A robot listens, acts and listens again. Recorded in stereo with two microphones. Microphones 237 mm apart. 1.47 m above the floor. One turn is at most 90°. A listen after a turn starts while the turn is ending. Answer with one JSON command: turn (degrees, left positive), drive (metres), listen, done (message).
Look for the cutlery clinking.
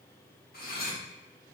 {"turn": 40}
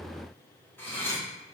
{"turn": 10}
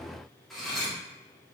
{"done": "Found it: cutlery clinking, straight ahead, 1 to 2 m away."}